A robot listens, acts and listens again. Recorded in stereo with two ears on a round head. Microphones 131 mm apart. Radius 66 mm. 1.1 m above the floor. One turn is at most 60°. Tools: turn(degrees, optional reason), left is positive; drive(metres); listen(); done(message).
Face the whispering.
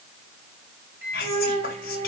turn(degrees=60)
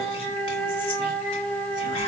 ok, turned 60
turn(degrees=30, reason="Nothing new. It was at 30° left.")
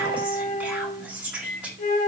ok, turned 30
turn(degrees=-10, reason="The whispering is now 10° right.")
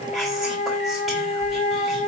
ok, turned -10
listen()
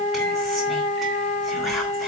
listen()
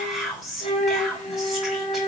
done("Found it: whispering, straight ahead.")